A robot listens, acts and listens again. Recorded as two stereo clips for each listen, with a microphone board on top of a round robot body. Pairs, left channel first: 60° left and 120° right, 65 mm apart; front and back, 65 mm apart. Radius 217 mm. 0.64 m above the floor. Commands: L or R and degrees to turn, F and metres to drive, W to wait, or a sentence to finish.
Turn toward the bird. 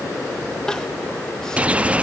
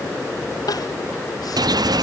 L170
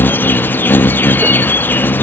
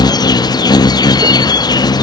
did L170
Facing the bird.